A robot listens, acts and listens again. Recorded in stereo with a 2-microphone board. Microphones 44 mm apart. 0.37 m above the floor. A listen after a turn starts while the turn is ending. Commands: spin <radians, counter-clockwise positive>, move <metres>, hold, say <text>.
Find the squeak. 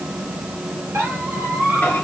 spin -1.31
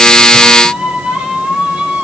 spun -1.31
spin -0.52
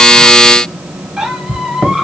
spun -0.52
spin -0.17
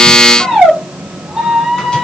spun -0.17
say Found it: a squeak, straight ahead.